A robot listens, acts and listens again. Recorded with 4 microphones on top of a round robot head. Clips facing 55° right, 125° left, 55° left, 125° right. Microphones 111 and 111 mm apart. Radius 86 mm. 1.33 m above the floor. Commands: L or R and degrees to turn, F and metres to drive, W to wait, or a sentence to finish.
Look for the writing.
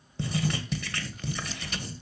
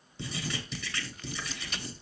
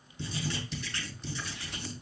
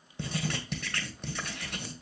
R90
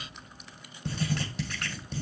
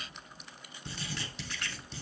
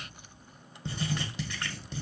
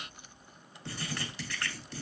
R15
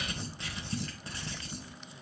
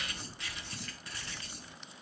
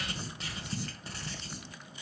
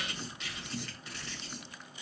Found it: writing, straight ahead, 1 to 2 m away.